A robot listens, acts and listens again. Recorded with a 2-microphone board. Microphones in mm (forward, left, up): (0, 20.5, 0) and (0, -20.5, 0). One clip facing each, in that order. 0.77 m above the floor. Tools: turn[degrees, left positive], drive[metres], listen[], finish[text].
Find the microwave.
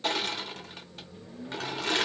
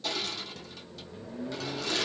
Thought: The microwave: about 75° right or 105° right.
Action: turn[-75]
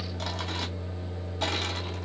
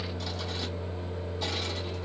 Thought: So it is at 20° right.
Action: turn[-20]
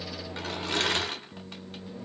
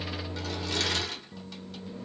Action: finish[Found it: a microwave, straight ahead.]